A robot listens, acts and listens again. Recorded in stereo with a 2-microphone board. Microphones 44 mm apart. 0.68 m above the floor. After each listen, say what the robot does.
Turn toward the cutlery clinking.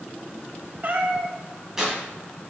Keep listening.
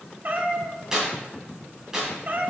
Keep listening.
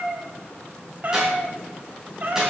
I can't make out cutlery clinking, only a cat meowing and tearing paper.